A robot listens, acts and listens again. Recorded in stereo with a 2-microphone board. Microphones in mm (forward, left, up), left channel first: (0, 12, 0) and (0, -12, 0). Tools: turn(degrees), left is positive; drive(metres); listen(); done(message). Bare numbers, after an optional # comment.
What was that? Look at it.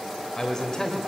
# The man speaking: about 25° left or 155° left.
turn(25)
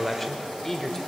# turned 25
# So it is at 10° left.
turn(10)
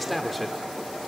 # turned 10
done("Facing the man speaking.")